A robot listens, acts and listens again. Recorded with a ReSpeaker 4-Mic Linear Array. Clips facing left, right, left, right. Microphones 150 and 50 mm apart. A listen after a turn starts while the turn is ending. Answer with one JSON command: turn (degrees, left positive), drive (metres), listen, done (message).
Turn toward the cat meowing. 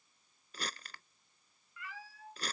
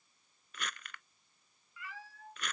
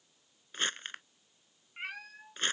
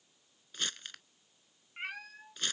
{"turn": 30}
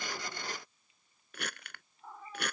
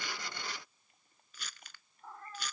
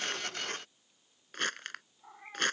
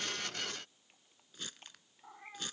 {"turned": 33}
{"turn": 30}
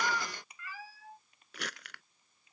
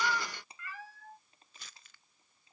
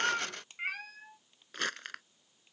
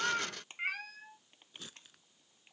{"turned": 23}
{"turn": 30}
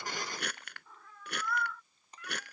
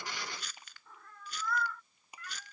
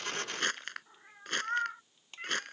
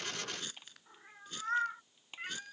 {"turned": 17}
{"turn": 30}
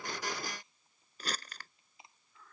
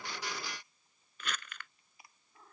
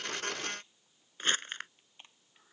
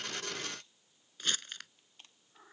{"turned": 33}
{"turn": -30}
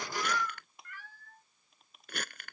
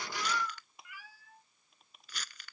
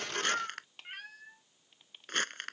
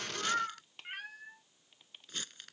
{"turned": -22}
{"turn": -10}
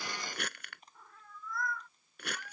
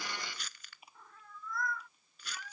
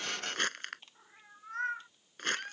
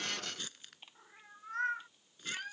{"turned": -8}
{"done": "Facing the cat meowing."}